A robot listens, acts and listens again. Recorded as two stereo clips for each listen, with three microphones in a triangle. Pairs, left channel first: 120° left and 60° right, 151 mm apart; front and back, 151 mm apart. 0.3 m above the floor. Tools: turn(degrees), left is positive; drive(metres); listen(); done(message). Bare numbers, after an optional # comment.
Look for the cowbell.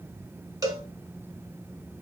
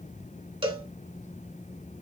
# The cowbell: 125° right.
turn(-125)
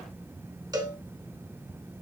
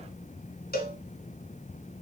done("Facing the cowbell.")